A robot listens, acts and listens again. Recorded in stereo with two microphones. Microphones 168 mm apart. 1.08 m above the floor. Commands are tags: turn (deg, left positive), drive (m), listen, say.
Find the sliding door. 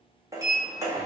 <turn deg="-20"/>
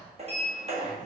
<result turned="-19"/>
<turn deg="-140"/>
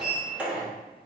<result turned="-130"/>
<say>Found it: a sliding door, straight ahead, 1 to 2 m away.</say>